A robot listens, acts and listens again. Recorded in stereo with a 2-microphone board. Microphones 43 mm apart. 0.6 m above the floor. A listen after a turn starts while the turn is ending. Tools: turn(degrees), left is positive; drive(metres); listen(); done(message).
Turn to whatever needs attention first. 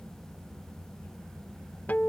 listen()
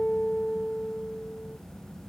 listen()
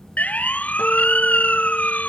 turn(degrees=35)
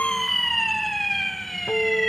done("Facing the siren.")